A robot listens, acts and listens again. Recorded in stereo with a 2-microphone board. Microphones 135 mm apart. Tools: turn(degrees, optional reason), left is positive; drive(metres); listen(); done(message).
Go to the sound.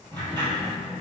turn(degrees=-35, reason="The sliding door: about 35° right or 145° right.")
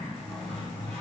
drive(metres=1.0)
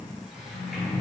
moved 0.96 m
drive(metres=1.0)
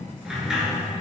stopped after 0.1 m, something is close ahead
done("Arrived at the sliding door, straight ahead.")